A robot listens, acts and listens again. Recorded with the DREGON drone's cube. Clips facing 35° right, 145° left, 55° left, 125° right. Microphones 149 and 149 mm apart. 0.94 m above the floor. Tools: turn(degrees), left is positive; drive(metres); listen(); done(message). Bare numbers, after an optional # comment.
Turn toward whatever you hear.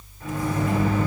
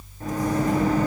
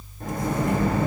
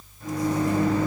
# The microwave: 95° left.
turn(95)
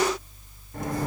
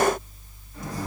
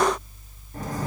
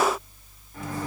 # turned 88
done("Facing the microwave.")